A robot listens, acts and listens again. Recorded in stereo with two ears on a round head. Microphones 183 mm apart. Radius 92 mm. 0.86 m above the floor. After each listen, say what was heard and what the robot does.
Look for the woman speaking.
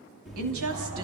Turn 90° right.
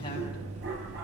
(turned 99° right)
Nothing new. It was at 10° left. Turn 10° left.
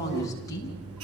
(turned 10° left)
The woman speaking is now 15° left. Turn 15° left.
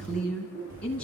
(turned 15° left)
Found it: a woman speaking, straight ahead, over 4 m away.